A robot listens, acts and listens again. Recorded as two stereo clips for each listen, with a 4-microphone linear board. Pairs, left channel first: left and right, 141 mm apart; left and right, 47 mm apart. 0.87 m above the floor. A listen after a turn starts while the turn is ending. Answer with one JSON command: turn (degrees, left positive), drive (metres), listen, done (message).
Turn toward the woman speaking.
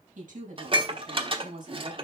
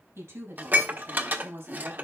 {"turn": -90}
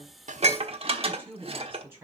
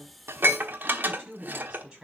{"turn": -20}
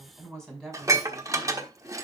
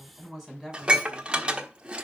{"done": "Found it: a woman speaking, straight ahead."}